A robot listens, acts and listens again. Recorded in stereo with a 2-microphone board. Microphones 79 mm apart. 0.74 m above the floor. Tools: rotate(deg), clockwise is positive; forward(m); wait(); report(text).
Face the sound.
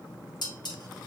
rotate(-60)
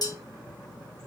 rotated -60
rotate(-55)
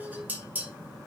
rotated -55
rotate(20)
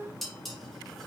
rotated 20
report("Facing the dishes clattering.")